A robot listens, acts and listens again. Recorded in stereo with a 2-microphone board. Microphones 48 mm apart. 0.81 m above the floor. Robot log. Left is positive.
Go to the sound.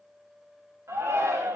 cmd yaw -90
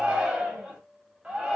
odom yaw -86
note: So it is at 15° right.
cmd yaw -15
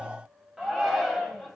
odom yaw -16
cmd fwd 1.0
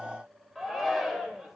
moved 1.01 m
cmd fwd 1.0
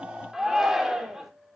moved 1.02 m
cmd fwd 1.0
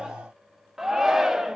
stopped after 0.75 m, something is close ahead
note: The shout is now 10° right.
cmd yaw -10
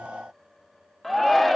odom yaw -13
end: I am next to the shout.